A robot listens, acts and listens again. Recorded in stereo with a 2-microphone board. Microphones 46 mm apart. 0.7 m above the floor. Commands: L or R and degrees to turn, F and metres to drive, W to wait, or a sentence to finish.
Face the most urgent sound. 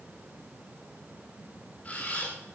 W
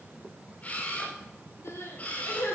L90
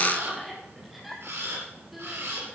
Facing the crying, 2 to 4 m away.